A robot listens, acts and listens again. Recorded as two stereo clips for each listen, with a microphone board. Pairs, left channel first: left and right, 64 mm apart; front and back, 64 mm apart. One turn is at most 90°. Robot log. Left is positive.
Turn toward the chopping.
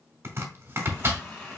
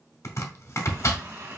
note: The chopping: 35° right.
cmd yaw -35
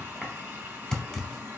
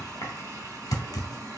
note: The chopping is now 10° left.
cmd yaw +10
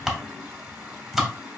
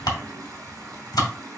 end: Facing the chopping, under 1 m away.